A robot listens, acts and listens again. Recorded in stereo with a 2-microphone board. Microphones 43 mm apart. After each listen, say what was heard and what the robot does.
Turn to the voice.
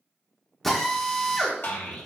The child speaking: about 55° left or 125° left. Turn 55° left.
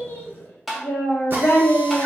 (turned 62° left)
So it is at 60° left. Turn 60° left.
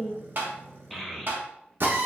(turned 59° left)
Found it: a child speaking, straight ahead, 1 to 2 m away.